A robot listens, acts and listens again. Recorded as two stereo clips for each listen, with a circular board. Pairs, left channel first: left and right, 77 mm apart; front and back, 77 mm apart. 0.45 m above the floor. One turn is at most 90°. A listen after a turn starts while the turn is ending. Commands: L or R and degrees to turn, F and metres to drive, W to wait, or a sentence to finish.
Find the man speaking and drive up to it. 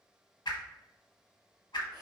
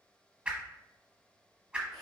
W
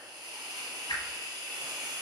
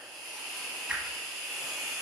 W
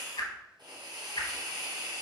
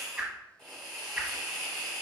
I can't make out a man speaking to turn to.